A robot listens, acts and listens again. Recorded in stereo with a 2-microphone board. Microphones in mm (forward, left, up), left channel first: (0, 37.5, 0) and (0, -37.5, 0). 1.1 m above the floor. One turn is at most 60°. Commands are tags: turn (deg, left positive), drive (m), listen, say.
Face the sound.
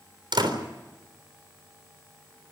<turn deg="-60"/>
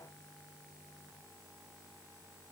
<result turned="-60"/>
<turn deg="-30"/>
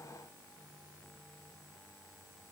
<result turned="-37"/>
<say>Facing where the door slam came from. I can't hear it now.</say>